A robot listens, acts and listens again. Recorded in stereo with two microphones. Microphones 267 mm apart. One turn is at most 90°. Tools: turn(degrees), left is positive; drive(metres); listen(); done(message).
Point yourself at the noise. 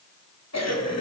turn(degrees=75)
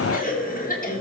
turn(degrees=30)
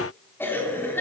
turn(degrees=10)
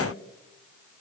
listen()
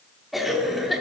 done("Facing the cough, 2 to 4 m away.")